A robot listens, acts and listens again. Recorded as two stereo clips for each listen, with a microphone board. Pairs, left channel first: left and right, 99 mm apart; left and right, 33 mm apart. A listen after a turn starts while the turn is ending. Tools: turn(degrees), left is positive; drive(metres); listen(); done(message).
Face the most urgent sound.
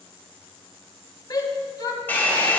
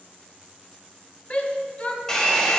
turn(degrees=40)
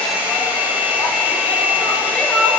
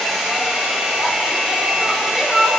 turn(degrees=10)
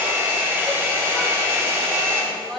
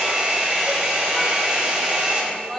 done("Facing the shout, 1 to 2 m away.")